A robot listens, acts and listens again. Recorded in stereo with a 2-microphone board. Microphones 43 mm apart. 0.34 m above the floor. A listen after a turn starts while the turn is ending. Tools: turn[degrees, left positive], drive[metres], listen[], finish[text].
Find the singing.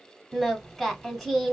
Action: turn[30]
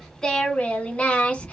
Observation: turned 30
Thought: So it is at 150° left.
Action: turn[150]
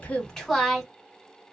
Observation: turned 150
Action: finish[Found it: singing, straight ahead.]